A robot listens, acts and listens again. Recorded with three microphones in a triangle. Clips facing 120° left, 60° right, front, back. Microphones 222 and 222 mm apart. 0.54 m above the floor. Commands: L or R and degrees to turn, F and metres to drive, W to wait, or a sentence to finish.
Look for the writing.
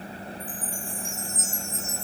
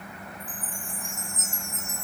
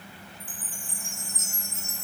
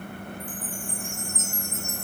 W
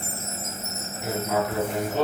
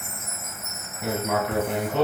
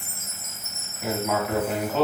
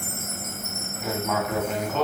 R85
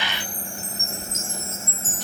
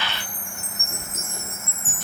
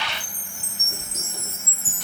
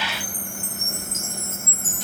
R25
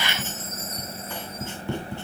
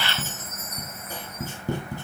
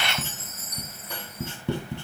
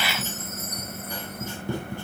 R10
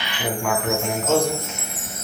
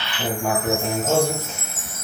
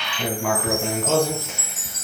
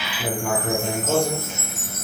Facing the writing, 2 to 4 m away.